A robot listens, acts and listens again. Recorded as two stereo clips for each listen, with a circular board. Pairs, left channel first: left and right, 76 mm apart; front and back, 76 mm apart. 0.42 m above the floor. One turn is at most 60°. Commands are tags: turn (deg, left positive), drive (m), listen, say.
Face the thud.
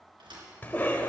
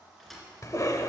<turn deg="-60"/>
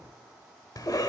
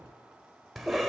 <turn deg="-30"/>
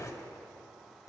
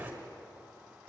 <say>Facing where the thud came from. I can't hear it now.</say>